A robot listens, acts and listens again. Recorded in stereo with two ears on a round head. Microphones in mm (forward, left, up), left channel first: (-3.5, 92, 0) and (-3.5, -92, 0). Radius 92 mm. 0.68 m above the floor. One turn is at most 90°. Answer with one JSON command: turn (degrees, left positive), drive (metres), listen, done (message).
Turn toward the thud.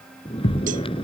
{"turn": 60}
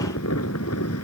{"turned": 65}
{"listen": true}
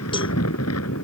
{"done": "I heard a thud, but can't make it out now. It was about 5° right or 55° left."}